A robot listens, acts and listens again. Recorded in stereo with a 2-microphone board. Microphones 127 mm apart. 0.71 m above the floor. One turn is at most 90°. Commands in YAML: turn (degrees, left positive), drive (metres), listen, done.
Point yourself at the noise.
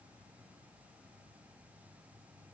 listen: true
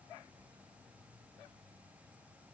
listen: true
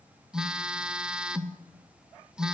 turn: -30
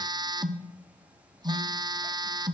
turn: -90
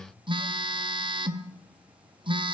turn: -45
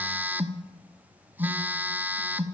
turn: -15
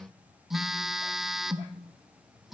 done: "Found it: a phone buzzing, straight ahead, under 1 m away."